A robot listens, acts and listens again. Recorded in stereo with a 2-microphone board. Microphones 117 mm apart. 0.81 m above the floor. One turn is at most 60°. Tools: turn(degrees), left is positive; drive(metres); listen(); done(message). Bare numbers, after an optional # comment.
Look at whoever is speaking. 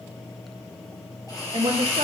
# The woman speaking: about 65° right or 115° right.
turn(-60)
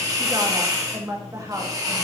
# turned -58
# So it is at 30° right.
turn(-30)
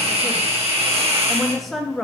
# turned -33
done("Facing the woman speaking.")